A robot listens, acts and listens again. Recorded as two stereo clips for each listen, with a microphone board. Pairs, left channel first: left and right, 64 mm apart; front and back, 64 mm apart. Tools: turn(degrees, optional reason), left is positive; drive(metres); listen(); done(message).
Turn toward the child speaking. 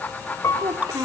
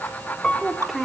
turn(degrees=-95, reason="The child speaking: 95° right.")
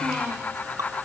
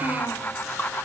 listen()
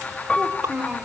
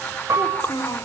turn(degrees=-15, reason="The child speaking is now 15° right.")
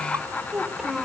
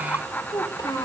done("Facing the child speaking.")